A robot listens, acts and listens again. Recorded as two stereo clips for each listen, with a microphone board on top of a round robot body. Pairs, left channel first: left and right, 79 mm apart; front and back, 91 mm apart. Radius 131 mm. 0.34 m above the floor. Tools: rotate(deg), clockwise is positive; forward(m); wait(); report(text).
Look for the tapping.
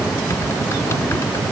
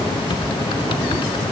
wait()
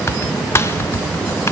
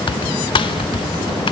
wait()
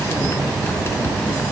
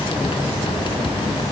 report("I can't make out tapping, only typing on a keyboard.")